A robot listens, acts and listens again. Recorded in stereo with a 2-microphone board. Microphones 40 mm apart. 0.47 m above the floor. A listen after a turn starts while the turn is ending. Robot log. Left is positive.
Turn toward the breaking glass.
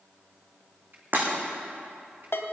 note: The breaking glass: about 45° right or 135° right.
cmd yaw -45
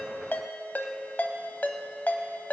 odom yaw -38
cmd idle
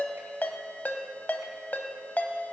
end: I heard breaking glass, but can't make it out now. It was about 5° right or 100° right.